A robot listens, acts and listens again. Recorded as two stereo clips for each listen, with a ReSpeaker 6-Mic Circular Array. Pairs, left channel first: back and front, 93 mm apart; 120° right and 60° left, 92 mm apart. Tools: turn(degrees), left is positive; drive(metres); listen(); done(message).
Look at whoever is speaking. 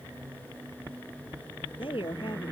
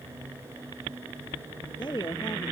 turn(degrees=-160)
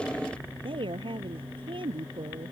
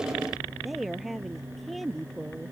turn(degrees=-30)
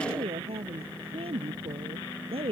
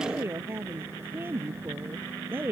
done("Found it: a woman speaking, straight ahead.")